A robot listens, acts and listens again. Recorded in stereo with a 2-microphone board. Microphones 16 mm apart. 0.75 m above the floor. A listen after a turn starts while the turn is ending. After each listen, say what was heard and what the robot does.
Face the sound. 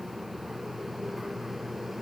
Keep listening.
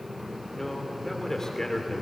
The man speaking: about 35° left or 145° left. Turn 35° left.
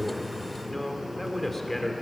So it is at 15° left. Turn 15° left.
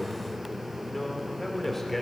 The man speaking is now 15° left. Turn 15° left.
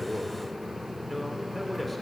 Found it: a man speaking, straight ahead.